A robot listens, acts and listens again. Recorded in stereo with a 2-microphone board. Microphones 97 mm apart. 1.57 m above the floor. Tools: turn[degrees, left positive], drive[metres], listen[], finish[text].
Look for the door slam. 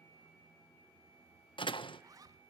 Thought: The door slam: about 60° left or 120° left.
Action: turn[60]
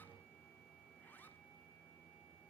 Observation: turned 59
Action: listen[]
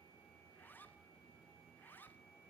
Action: finish[I heard a door slam, but can't make it out now. It was about straight ahead or 65° left.]